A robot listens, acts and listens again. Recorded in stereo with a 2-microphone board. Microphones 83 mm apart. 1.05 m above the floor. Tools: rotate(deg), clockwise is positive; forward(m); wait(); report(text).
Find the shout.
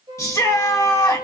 rotate(-40)
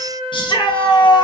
rotate(-100)
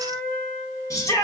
rotate(-40)
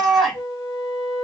report("Facing the shout.")